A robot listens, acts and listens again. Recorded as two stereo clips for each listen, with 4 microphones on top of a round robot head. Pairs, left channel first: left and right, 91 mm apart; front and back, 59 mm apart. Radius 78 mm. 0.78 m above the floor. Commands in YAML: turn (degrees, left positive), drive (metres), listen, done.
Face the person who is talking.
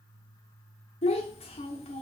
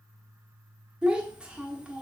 turn: 105
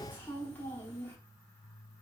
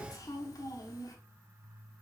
turn: 15
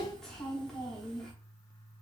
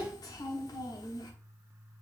done: "Found it: a child speaking, straight ahead, 1 to 2 m away."